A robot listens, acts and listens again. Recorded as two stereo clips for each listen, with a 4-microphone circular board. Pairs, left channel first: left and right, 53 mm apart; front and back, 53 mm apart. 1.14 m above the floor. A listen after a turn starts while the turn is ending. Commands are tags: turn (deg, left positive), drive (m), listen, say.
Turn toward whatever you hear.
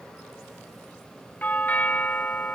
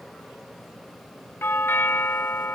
<turn deg="35"/>
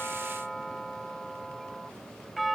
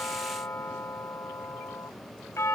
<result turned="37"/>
<say>Facing the doorbell.</say>